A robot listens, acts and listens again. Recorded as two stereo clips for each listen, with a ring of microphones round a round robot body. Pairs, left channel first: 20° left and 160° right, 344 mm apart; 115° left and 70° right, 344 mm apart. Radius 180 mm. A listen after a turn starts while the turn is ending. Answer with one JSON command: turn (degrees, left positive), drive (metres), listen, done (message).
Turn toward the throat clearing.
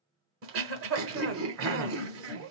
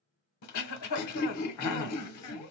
{"turn": 150}
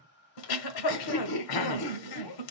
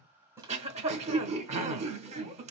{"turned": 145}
{"done": "Found it: throat clearing, straight ahead, under 1 m away."}